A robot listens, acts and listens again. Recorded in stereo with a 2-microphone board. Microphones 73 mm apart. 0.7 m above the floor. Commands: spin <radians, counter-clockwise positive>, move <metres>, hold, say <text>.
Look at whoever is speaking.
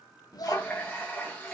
spin 1.05
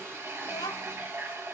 spin 1.05
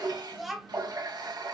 say Found it: a child speaking, straight ahead.